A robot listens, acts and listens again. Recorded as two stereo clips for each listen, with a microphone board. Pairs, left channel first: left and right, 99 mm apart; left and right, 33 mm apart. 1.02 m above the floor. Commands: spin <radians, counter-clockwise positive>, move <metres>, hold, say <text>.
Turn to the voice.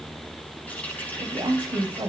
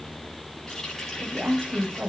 spin -0.70
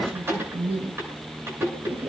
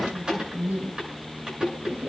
spin -1.75
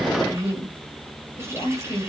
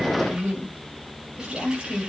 spin 0.52
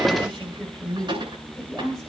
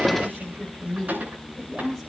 say Found it: a woman speaking, straight ahead.